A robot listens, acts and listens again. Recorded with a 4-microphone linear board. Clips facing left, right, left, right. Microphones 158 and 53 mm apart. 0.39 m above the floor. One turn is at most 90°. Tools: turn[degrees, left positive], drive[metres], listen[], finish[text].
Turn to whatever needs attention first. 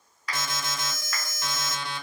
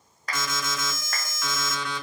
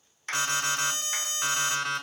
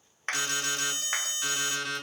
Thought: The alarm: about 30° left or 150° left.
Action: turn[30]
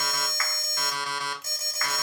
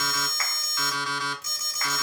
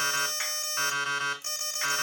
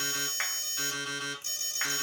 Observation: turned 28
Thought: So it is at 115° left.
Action: turn[90]
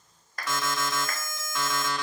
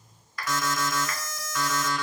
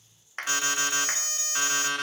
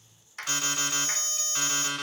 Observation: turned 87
Thought: The alarm is now 30° left.
Action: turn[30]
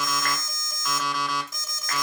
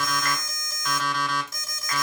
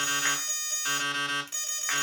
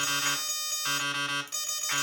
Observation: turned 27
Action: finish[Facing the alarm, 2 to 4 m away.]